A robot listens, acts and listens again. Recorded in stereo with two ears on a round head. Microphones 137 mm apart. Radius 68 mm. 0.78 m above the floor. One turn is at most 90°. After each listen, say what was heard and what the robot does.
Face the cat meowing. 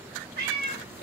The cat meowing: about 65° right or 115° right. Turn 65° right.
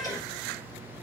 Keep listening.
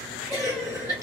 Keep listening.
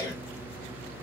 I heard a cat meowing, but can't make it out now. It was about straight ahead or 50° right.